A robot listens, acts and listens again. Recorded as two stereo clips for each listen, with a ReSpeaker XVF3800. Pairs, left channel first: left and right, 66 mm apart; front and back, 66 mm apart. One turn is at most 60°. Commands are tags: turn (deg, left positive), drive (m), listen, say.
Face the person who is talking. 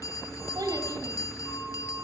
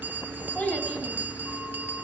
<turn deg="-60"/>
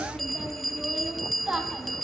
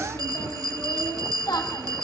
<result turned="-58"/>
<turn deg="-15"/>
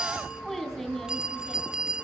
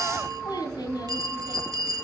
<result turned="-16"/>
<say>Facing the child speaking, over 4 m away.</say>